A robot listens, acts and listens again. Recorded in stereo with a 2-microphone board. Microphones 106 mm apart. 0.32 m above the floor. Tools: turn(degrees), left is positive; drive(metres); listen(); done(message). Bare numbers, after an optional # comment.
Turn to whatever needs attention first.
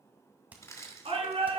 # The shout: about 70° right or 110° right.
turn(-70)
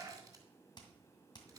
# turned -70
# So it is at 35° right.
turn(-35)
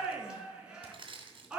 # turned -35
# The shout is now 10° right.
turn(-10)
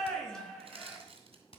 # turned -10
done("Facing the shout, 2 to 4 m away.")